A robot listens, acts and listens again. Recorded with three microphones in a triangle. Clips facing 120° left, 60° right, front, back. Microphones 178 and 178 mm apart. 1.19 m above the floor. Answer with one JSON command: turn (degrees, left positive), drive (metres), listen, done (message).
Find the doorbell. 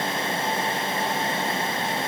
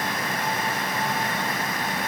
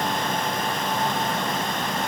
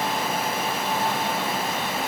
{"listen": true}
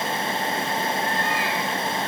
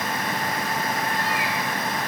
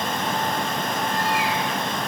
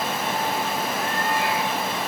{"listen": true}
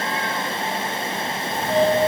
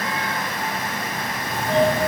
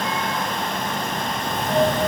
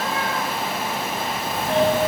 {"turn": -25}
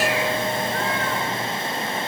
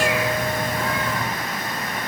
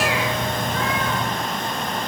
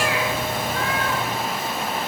{"turn": 25}
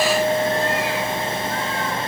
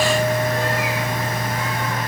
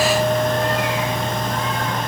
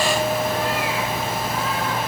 {"turn": -10}
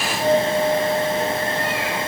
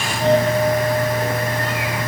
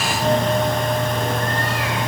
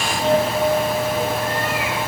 {"done": "Found it: a doorbell, straight ahead."}